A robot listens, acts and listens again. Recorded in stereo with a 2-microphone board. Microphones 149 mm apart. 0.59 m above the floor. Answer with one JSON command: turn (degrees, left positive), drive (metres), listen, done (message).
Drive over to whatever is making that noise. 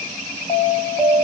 {"turn": 20}
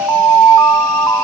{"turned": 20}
{"drive": 1.0}
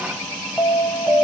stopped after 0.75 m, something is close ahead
{"done": "Arrived at the alarm, straight ahead."}